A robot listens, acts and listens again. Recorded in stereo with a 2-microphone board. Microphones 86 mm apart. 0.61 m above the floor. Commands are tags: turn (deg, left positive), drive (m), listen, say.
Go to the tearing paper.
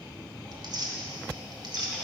<turn deg="-55"/>
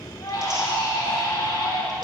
<listen/>
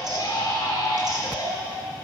<listen/>
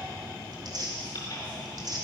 <turn deg="-60"/>
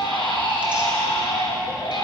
<listen/>
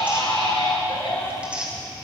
<turn deg="-15"/>
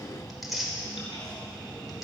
<drive m="1.0"/>
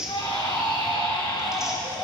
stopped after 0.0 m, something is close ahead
<say>Something is in my way. I am facing the tearing paper but have not reached it.</say>